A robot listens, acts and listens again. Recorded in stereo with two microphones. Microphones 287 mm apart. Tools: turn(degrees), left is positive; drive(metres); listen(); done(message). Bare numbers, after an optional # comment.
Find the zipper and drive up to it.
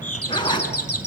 # The zipper: about 15° left or 165° left.
turn(15)
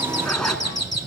drive(1.0)
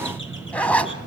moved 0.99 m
drive(1.0)
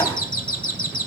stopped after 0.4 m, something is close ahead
listen()
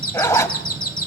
# The zipper is now 10° left.
turn(10)
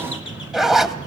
done("I am next to the zipper.")